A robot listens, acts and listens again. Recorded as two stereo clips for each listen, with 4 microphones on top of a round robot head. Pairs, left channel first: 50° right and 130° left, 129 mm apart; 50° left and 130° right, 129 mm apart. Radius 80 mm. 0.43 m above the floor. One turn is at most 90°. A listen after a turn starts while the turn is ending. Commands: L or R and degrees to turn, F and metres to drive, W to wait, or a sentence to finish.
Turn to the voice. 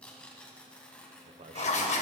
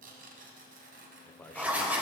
L90
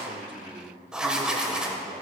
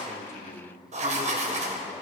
L90
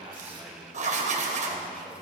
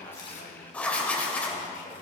W
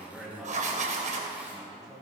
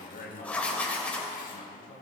L45
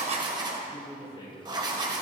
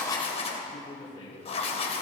Found it: a man speaking, straight ahead.